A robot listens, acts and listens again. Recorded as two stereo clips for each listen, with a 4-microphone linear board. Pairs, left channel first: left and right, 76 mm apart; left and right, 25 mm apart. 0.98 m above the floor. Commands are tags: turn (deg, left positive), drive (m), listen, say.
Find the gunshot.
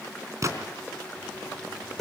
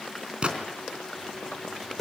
<turn deg="-45"/>
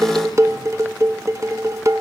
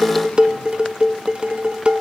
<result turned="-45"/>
<listen/>
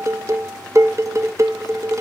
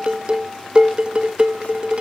<say>I heard a gunshot, but can't make it out now. It was about straight ahead or 90° right.</say>